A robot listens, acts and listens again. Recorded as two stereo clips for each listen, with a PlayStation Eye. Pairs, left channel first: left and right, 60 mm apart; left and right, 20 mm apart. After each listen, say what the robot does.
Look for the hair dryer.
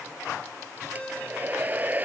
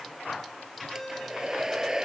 Turn 30° right.
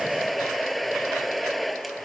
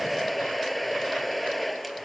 Found it: a hair dryer, straight ahead.